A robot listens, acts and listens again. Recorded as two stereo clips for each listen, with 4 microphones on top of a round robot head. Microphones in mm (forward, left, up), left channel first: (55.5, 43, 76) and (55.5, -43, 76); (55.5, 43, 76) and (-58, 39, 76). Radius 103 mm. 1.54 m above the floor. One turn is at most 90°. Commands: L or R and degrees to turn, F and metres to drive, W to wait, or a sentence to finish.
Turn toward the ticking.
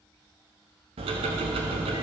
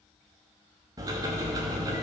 R90
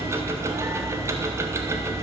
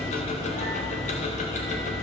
R35
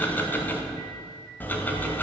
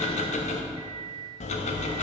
L20
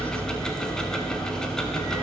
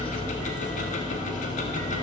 L10
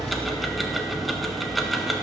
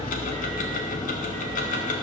Found it: ticking, straight ahead.